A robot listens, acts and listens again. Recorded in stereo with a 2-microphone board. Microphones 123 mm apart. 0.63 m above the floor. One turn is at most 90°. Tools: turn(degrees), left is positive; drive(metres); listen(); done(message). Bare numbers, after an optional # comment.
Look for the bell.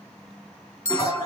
# The bell: about 70° right or 110° right.
turn(-70)
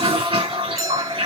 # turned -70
listen()
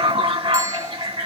listen()
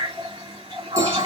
done("I heard a bell, but can't make it out now. It was about straight ahead or 40° right.")